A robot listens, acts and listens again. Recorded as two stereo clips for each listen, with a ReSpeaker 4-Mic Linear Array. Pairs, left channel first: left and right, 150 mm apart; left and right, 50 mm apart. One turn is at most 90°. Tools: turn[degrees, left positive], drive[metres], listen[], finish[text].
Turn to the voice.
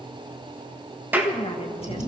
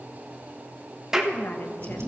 Thought: The woman speaking: about 45° left or 135° left.
Action: turn[45]
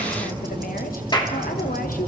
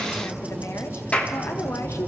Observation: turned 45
Action: listen[]
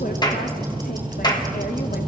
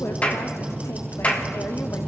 Action: listen[]
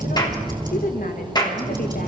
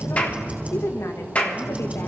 Thought: So it is at 90° left.
Action: turn[90]
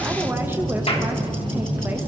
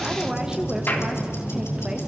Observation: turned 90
Action: listen[]
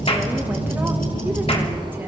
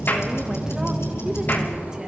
Action: listen[]
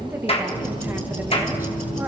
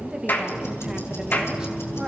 Thought: The woman speaking is now 15° right.
Action: turn[-15]
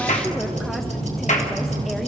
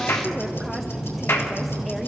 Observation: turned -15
Action: listen[]
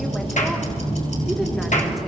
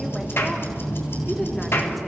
Action: listen[]
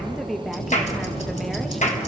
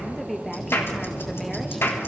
Action: finish[Facing the woman speaking, 1 to 2 m away.]